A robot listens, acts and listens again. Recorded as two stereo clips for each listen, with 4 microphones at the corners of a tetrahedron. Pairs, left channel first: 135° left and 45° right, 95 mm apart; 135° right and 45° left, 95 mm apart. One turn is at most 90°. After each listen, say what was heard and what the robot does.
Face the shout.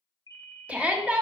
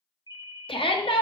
The shout: 120° right. Turn 90° right.
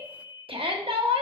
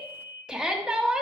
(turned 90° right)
The shout is now 35° right. Turn 35° right.
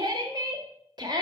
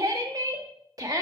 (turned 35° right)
Found it: a shout, straight ahead.